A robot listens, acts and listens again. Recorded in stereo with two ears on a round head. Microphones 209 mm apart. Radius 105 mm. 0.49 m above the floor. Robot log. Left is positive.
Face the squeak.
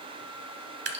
cmd idle
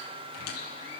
cmd yaw +90
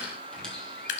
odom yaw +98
end: Facing the squeak.